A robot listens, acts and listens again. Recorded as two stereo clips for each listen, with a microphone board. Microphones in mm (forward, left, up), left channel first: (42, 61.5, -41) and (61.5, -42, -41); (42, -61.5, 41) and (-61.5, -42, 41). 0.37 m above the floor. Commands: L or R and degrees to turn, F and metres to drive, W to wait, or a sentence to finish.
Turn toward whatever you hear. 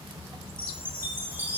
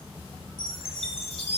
R10
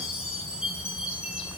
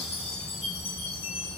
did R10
Facing the chime.